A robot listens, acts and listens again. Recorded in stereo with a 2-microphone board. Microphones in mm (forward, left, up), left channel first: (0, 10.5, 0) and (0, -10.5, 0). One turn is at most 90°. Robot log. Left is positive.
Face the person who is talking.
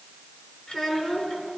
note: The child speaking: about 55° left or 125° left.
cmd yaw +55
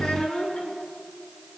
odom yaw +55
note: So it is at 70° left.
cmd yaw +70
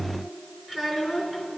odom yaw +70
note: The child speaking is now 10° right.
cmd yaw -10
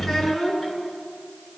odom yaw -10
end: Found it: a child speaking, straight ahead.